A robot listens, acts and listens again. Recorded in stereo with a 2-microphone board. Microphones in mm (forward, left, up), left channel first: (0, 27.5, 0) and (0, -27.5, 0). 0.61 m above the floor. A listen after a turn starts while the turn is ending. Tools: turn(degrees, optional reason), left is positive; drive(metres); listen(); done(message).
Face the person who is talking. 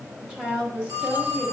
turn(degrees=-15, reason="The woman speaking: about 15° right or 165° right.")
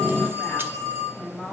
done("Found it: a woman speaking, straight ahead, 2 to 4 m away.")